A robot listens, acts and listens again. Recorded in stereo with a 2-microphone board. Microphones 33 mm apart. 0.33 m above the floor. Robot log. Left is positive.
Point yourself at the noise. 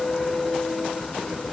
cmd idle
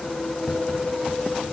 cmd yaw +30
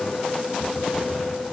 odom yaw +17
note: So it is at 165° left.
cmd yaw +165
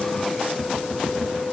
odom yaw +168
end: Found it: tapping, straight ahead.